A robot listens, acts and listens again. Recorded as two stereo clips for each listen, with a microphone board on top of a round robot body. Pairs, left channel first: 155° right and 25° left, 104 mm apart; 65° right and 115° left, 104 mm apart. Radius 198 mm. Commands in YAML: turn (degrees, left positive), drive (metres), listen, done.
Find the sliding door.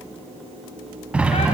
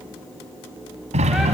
turn: 100
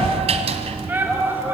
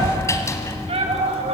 done: "Found it: a sliding door, straight ahead."